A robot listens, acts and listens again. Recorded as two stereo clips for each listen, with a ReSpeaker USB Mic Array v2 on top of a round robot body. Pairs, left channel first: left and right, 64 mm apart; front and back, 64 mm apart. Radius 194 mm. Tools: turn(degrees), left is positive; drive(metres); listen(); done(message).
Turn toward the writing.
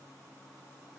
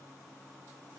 listen()
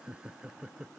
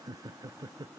listen()
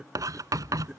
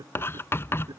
turn(degrees=-55)
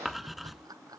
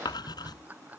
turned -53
done("Found it: writing, straight ahead.")